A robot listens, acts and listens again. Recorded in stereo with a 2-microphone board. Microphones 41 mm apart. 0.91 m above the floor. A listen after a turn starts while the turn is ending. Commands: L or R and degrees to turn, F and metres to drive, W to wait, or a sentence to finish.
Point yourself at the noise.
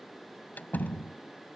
L45
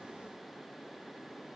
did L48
W
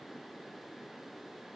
I heard a door slam, but can't make it out now. It was about straight ahead or 85° left.